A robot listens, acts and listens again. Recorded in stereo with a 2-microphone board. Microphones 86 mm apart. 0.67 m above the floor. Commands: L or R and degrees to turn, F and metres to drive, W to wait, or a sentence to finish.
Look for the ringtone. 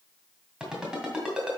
R30
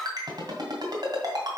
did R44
R130
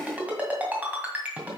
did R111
R15
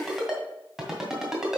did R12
Found it: a ringtone, straight ahead, 2 to 4 m away.